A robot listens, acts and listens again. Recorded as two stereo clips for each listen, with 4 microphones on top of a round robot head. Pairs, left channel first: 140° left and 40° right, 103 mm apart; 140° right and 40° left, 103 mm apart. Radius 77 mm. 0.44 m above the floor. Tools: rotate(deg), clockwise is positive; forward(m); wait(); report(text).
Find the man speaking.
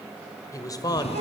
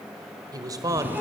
rotate(-95)
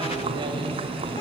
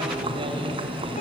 wait()
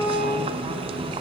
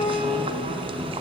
wait()
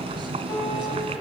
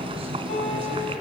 report("Facing where the man speaking came from. I can't hear it now.")